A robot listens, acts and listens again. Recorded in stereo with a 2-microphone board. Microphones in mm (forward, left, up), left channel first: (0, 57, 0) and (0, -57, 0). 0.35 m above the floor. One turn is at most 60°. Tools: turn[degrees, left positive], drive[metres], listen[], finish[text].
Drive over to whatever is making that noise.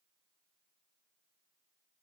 Action: listen[]
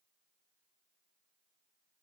Action: listen[]
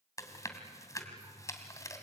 Thought: The chewing: about 30° left or 150° left.
Action: turn[30]
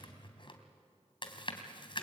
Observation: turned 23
Thought: So it is at 130° left.
Action: turn[60]
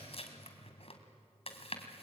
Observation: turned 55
Thought: The chewing is now 70° left.
Action: turn[60]
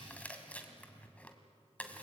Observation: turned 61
Thought: The chewing is now 15° left.
Action: turn[15]
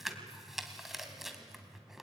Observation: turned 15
Action: drive[1.0]
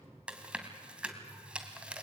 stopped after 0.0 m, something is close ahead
Thought: The chewing is now 10° right.
Action: turn[-10]
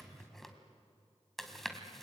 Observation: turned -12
Action: finish[Something is in my way. I am facing the chewing but have not reached it.]